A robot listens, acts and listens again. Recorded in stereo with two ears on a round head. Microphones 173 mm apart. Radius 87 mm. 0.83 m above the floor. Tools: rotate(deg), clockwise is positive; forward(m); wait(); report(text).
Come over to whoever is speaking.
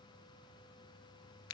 wait()
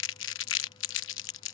wait()
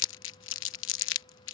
report("I can't make out anyone speaking to turn to.")